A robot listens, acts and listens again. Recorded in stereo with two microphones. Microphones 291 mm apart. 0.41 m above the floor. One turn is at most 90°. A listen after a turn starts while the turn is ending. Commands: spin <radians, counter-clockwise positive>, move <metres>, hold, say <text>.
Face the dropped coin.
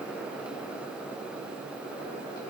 hold
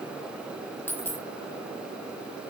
spin 0.52
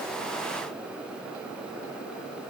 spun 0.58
hold
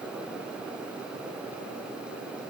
say I heard a dropped coin, but can't make it out now. It was about 25° right or 140° left.